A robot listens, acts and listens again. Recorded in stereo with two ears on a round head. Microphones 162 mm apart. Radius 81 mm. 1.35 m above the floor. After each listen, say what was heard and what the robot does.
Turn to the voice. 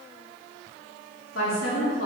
Turn 90° left.
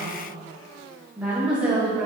So it is at 10° right. Turn 10° right.
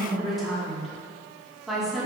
Facing the woman speaking.